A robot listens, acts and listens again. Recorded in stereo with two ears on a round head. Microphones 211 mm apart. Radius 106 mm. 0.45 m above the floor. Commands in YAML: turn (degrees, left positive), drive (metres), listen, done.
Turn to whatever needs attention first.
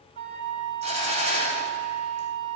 listen: true
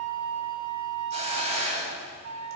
listen: true
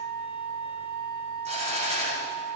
done: "I can't make out anything urgent, only a hiss and a flute."